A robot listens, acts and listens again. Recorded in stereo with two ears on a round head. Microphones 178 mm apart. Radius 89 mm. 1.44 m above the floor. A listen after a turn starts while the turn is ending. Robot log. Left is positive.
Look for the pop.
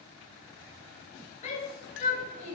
cmd idle
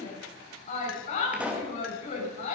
cmd yaw -30
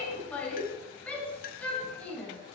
cmd idle
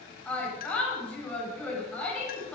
end: I heard a pop, but can't make it out now. It was about 25° left or 145° right.